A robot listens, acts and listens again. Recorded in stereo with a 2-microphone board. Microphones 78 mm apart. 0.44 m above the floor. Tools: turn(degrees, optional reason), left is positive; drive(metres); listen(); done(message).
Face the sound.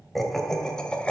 turn(degrees=30)
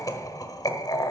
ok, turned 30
turn(degrees=125, reason="So it is at 125° left.")
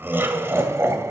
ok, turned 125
turn(degrees=-35, reason="The laughter is now 35° right.")
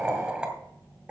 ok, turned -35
turn(degrees=-15, reason="The laughter is now 15° right.")
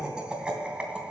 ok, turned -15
turn(degrees=-10, reason="The laughter is now 10° right.")
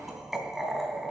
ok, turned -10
done("Facing the laughter, 2 to 4 m away.")